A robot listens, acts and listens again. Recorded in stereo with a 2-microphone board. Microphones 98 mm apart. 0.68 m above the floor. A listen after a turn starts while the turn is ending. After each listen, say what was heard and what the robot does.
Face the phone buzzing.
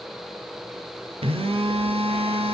The phone buzzing: about 75° right or 105° right. Turn 75° right.
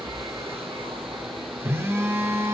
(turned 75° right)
So it is at 25° right. Turn 25° right.
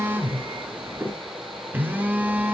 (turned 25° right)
The phone buzzing is now 20° right. Turn 20° right.
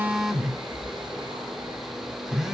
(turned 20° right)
Found it: a phone buzzing, straight ahead, 1 to 2 m away.